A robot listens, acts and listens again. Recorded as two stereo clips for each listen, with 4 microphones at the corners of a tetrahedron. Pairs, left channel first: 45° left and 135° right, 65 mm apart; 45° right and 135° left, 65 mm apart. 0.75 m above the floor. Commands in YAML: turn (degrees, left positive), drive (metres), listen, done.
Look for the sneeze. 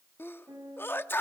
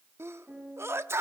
turn: 95
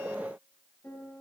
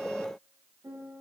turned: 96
done: "I heard a sneeze from this way, but can't make it out now."